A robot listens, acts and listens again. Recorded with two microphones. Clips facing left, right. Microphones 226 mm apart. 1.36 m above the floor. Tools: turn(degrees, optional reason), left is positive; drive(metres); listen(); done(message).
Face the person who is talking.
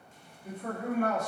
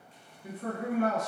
turn(degrees=-90)
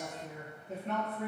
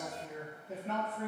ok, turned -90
done("Facing the man speaking.")